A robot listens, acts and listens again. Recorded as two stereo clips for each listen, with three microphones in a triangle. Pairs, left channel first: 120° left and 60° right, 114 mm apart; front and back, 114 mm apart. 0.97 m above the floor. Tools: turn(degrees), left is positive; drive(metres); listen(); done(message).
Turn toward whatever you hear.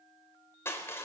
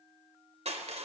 turn(degrees=-175)
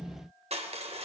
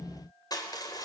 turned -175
turn(degrees=-55)
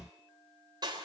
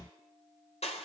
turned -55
turn(degrees=-10)
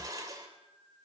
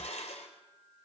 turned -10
done("Found it: crushing, straight ahead, 2 to 4 m away.")